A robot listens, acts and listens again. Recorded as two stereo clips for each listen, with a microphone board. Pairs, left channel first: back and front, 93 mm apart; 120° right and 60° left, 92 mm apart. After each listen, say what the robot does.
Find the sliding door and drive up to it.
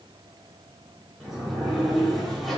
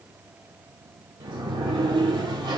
Turn 90° left.
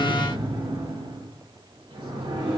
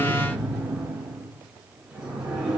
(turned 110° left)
Turn 20° right.
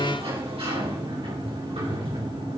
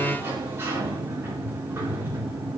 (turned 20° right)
Drive 1.0 m forward.
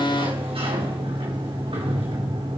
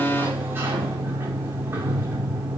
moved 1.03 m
Drive 1.0 m forward.
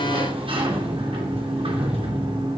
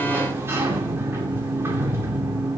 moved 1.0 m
Drive 1.0 m forward.
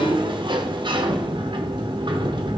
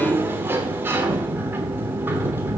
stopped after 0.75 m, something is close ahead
I am next to the sliding door.